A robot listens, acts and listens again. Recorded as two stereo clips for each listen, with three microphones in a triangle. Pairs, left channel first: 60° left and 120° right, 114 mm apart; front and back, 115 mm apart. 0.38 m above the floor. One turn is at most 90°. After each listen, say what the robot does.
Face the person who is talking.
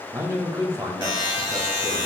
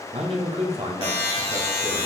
Turn 90° left.
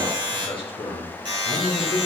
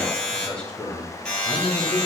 Turn 80° left.
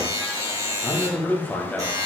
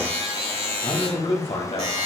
Turn 15° right.
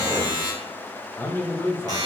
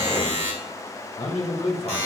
Facing the man speaking.